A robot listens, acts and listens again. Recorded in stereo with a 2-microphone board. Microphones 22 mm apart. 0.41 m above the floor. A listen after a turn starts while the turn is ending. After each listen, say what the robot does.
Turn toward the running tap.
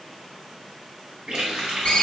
Turn 55° right.
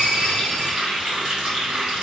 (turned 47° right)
Turn 55° right.
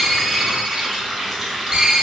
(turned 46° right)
Turn 10° right.
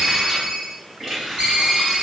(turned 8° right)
Found it: a running tap, straight ahead, 1 to 2 m away.